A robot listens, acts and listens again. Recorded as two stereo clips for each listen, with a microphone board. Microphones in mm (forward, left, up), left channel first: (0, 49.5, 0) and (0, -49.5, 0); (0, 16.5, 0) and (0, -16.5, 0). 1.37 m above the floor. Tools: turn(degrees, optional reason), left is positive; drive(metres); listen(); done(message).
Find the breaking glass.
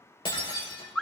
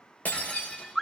turn(degrees=65, reason="The breaking glass: about 65° left or 115° left.")
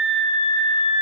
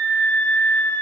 listen()
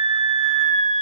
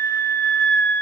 done("I heard breaking glass, but can't make it out now. It was about straight ahead or 50° left.")